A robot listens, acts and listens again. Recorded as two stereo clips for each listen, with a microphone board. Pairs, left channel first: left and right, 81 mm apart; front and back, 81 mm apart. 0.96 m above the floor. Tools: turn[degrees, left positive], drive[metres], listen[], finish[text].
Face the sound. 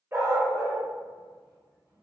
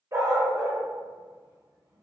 Thought: The dog barking: 145° right.
Action: turn[-145]
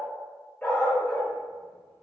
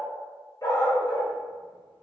Thought: The dog barking is now 20° left.
Action: turn[20]
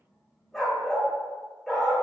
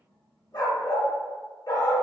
Action: finish[Found it: a dog barking, straight ahead.]